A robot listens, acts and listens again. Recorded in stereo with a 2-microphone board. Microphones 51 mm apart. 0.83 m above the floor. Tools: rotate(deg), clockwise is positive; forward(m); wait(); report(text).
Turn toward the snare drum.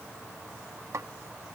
rotate(70)
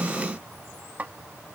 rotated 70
rotate(35)
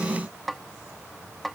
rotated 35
report("Facing the snare drum.")